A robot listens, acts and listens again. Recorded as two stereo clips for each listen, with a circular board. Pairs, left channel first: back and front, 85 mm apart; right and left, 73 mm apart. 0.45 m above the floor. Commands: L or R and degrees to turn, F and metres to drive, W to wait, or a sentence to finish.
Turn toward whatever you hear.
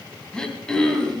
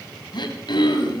R100
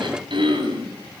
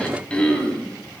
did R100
R15
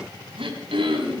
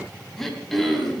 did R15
Found it: throat clearing, straight ahead, 2 to 4 m away.